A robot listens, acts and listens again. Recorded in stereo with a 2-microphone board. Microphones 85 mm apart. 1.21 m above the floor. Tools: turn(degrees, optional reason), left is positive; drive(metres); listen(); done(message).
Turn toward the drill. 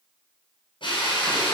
turn(degrees=75, reason="The drill: about 75° left or 105° left.")
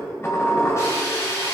turn(degrees=35, reason="So it is at 35° left.")
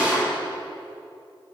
turn(degrees=-15, reason="The drill is now 15° right.")
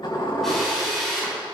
done("Facing the drill, over 4 m away.")